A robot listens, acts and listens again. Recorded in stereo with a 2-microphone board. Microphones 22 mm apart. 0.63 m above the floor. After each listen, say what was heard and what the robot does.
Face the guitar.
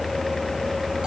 Keep listening.
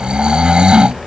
Keep listening.
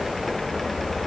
I can't make out a guitar to turn to.